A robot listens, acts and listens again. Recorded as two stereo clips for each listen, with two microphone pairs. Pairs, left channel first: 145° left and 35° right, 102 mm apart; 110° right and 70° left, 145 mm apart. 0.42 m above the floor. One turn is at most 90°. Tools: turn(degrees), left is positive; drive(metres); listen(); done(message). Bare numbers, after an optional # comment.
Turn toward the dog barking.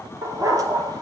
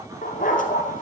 # The dog barking: 85° right.
turn(-85)
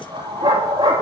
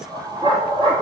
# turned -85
# The dog barking is now 15° left.
turn(15)
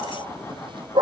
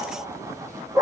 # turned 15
done("Found it: a dog barking, straight ahead.")